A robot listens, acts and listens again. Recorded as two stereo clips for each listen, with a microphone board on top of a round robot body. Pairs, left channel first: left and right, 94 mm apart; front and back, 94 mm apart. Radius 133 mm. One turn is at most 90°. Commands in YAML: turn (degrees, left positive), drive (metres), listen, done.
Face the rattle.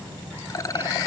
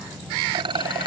turn: 90
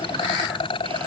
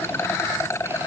turn: 60
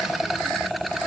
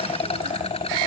done: "Found it: a rattle, straight ahead."